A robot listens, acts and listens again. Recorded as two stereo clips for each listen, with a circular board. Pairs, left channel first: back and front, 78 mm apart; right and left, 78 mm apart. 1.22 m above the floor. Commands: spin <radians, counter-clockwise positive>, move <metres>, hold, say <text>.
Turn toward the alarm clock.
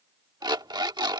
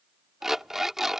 say Found it: an alarm clock, straight ahead.